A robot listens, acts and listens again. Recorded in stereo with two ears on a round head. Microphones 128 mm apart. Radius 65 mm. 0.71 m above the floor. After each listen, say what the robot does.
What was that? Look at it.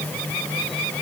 Keep listening.
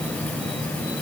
Keep listening.
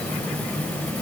I can't make out anything to turn to.